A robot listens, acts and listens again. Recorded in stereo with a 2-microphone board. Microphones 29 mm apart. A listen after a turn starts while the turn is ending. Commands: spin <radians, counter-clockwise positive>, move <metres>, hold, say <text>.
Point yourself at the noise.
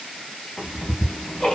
spin 0.44
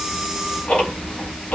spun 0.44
spin 2.27
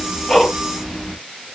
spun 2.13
say Facing the ticking.